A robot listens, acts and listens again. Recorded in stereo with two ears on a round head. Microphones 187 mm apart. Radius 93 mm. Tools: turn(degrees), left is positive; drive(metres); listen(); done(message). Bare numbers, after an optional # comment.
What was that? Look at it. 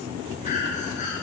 # The breathing: about 35° left or 145° left.
turn(35)
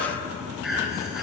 done("Facing the breathing.")